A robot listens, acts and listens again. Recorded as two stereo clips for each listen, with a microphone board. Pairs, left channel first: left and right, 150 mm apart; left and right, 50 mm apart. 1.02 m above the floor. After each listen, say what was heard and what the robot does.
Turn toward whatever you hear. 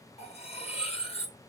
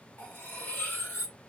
The cutlery clinking: about 40° left or 140° left. Turn 40° left.
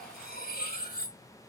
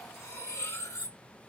So it is at 100° left. Turn 100° left.
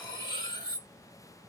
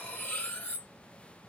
The cutlery clinking is now 30° left. Turn 30° left.
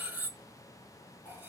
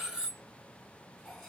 The cutlery clinking is now 10° right. Turn 10° right.
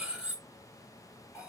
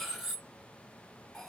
Facing the cutlery clinking.